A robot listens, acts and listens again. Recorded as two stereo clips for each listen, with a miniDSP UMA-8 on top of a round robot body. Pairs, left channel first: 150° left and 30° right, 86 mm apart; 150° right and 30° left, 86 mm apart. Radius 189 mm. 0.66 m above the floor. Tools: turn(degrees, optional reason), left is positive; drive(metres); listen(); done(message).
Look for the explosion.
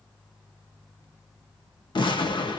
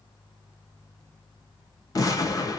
turn(degrees=165, reason="The explosion: 165° left.")
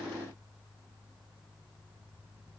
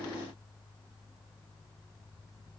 done("I heard an explosion from this way, but can't make it out now.")